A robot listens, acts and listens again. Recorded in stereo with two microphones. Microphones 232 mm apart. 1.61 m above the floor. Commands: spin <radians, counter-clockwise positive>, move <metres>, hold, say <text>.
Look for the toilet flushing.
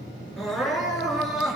hold
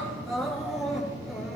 hold
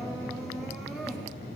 say I can't make out a toilet flushing, only crying.